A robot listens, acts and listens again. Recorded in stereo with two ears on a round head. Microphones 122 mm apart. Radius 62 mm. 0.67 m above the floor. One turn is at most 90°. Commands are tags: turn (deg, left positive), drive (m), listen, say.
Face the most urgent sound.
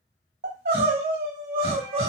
<turn deg="-90"/>
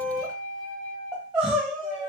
<say>Found it: crying, straight ahead, 1 to 2 m away.</say>